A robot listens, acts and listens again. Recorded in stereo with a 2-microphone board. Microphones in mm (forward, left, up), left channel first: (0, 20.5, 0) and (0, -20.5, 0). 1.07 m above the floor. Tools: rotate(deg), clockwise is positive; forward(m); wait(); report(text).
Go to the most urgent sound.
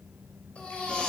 rotate(-30)
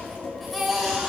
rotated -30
forward(1.0)
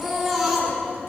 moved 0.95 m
forward(1.0)
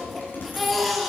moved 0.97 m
forward(1.0)
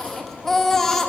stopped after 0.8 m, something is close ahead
rotate(-10)
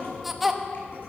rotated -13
report("I am next to the baby crying.")